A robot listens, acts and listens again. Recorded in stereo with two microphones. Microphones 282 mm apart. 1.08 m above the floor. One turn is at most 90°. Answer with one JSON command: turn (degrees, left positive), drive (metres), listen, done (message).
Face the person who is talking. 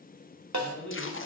{"turn": 90}
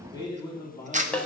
{"turn": 15}
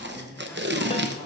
{"listen": true}
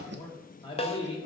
{"turn": 20}
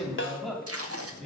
{"done": "Found it: a man speaking, straight ahead, 2 to 4 m away."}